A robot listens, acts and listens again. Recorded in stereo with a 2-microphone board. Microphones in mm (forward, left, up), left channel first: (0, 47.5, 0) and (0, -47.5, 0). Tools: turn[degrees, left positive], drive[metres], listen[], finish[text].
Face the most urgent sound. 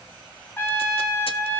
Action: listen[]
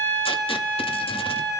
Action: listen[]
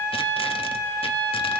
Action: finish[I can't make out anything urgent, only a trumpet.]